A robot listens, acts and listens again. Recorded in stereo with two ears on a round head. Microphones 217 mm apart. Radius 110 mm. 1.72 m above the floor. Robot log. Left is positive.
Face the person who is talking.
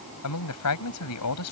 note: The man speaking: about 70° left or 110° left.
cmd yaw +70
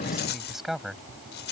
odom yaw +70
end: Found it: a man speaking, straight ahead.